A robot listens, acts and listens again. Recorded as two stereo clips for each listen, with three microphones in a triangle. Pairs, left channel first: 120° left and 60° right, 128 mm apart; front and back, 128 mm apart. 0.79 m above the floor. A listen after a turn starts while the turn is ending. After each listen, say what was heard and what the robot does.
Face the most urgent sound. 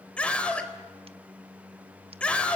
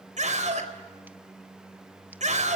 The scream: 160° right. Turn 160° right.
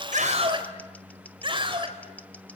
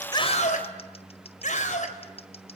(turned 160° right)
The scream is now 10° right. Turn 10° right.
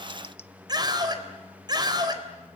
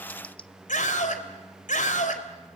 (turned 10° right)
Found it: a scream, straight ahead, 2 to 4 m away.